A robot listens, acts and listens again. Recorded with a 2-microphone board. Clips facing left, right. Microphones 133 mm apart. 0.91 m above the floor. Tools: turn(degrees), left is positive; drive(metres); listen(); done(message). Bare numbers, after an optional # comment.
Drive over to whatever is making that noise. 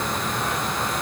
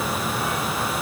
listen()
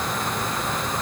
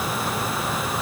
listen()
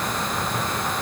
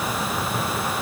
done("I can't make out anything to turn to.")